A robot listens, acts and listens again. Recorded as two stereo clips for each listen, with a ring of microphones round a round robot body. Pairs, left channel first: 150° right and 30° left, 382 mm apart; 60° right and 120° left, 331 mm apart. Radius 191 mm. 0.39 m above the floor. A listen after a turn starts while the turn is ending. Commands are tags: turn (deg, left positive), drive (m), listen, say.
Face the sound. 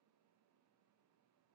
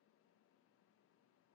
<listen/>
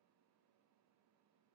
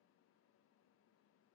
<listen/>
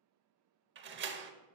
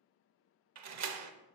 <turn deg="90"/>
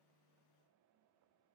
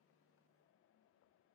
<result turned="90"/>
<say>Facing where the door slam came from. I can't hear it now.</say>